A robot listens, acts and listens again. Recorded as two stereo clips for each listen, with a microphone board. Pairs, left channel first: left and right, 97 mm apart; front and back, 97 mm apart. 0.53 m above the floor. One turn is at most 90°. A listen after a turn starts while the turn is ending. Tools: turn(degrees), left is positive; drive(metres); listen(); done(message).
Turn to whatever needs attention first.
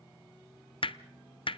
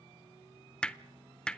listen()
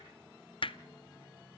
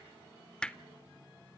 listen()
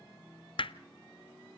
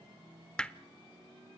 done("I can't make out anything urgent, only hammering.")